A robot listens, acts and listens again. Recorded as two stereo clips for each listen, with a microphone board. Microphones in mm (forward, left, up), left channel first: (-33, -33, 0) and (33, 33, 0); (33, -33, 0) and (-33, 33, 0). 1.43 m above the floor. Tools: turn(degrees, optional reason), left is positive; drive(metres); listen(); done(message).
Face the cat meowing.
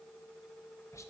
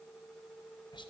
listen()
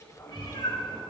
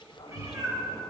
turn(degrees=-170, reason="The cat meowing: 170° right.")
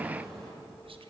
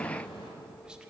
turn(degrees=-50, reason="The cat meowing is now 50° right.")
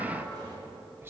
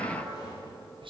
done("Facing the cat meowing.")